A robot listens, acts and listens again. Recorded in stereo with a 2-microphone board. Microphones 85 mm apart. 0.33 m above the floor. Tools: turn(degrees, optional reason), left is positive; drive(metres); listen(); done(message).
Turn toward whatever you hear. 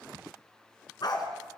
turn(degrees=55, reason="The dog barking: about 55° left or 125° left.")
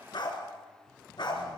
turn(degrees=65, reason="So it is at 65° left.")
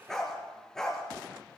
done("Found it: a dog barking, straight ahead, 2 to 4 m away.")